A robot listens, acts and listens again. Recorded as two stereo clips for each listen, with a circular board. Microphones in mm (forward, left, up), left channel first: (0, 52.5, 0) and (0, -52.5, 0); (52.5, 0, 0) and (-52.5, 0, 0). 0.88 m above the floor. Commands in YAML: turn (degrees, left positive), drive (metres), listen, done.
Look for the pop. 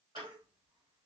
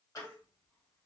listen: true
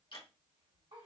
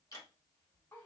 listen: true
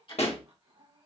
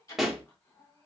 turn: 90
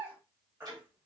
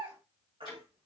done: "I heard a pop from this way, but can't make it out now."